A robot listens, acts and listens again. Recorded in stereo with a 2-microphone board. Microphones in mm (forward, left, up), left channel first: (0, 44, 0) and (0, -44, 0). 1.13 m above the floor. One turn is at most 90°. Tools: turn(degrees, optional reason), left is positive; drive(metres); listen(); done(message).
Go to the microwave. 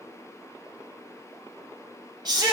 listen()
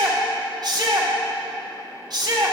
listen()
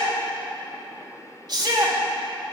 done("I can't make out a microwave, only a shout.")